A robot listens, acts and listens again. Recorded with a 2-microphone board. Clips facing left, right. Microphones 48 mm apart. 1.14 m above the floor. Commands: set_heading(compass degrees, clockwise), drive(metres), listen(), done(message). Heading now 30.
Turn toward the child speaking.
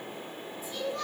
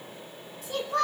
set_heading(120)
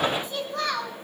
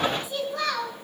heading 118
done("Facing the child speaking, over 4 m away.")